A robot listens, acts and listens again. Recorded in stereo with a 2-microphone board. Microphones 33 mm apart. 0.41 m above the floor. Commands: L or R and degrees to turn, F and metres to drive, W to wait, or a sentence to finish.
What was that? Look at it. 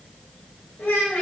L60
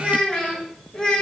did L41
L15
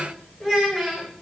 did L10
R10
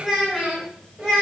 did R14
R20
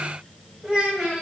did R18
R15
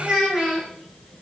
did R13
R10
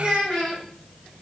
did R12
Facing the child speaking, 1 to 2 m away.